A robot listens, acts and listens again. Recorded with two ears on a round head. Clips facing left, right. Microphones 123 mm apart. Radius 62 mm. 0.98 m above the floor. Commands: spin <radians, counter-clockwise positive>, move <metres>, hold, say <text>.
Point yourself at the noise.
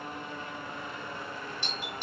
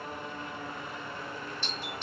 spin 0.52
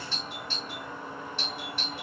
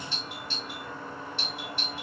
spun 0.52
spin 2.27
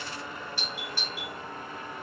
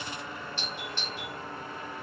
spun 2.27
spin 0.17
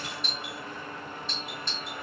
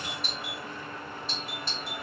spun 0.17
say Facing the doorbell, 1 to 2 m away.